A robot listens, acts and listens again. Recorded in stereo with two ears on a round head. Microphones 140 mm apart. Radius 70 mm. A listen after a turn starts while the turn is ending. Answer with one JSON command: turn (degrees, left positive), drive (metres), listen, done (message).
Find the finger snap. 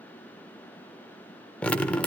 {"listen": true}
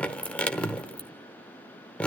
{"listen": true}
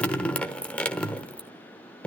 {"done": "I can't make out a finger snap to turn to."}